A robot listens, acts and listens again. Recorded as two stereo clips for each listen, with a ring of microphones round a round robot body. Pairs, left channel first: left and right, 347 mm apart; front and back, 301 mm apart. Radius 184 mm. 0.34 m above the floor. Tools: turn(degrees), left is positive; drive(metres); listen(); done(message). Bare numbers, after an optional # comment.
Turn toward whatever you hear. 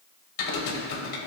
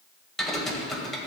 # The typing on a keyboard: 90° left.
turn(90)
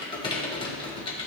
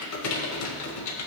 # The typing on a keyboard is now 15° left.
turn(15)
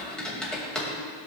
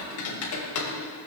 done("Found it: typing on a keyboard, straight ahead, 1 to 2 m away.")